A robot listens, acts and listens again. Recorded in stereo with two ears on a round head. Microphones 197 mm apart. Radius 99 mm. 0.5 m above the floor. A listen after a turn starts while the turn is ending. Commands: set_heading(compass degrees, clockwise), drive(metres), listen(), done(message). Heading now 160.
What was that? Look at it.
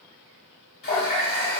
set_heading(115)
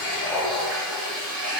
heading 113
done("Facing the running tap.")